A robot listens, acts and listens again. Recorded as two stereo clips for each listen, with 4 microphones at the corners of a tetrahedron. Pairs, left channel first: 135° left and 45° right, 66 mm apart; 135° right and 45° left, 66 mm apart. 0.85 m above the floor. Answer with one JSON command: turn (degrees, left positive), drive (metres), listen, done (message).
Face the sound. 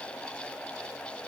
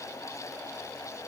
{"listen": true}
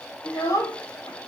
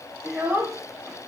{"turn": 105}
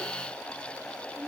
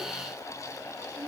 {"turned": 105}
{"listen": true}
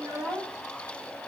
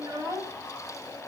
{"done": "Found it: a child speaking, straight ahead, 2 to 4 m away."}